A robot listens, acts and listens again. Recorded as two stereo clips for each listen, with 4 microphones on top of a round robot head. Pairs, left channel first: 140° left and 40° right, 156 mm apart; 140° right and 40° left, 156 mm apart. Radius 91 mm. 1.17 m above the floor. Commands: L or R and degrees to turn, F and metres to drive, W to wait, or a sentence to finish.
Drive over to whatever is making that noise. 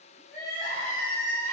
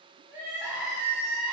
L115
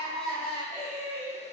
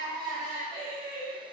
F1.0
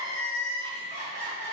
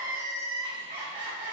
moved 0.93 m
F1.0
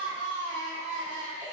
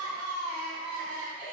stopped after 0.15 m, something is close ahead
L10
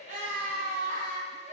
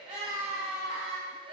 Arrived at the crying, straight ahead.